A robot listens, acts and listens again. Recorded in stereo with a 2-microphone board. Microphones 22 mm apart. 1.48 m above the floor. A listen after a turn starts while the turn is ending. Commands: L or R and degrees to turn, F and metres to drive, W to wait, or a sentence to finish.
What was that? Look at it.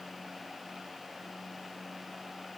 W
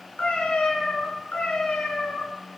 L90
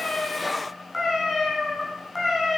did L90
Found it: a cat meowing, straight ahead.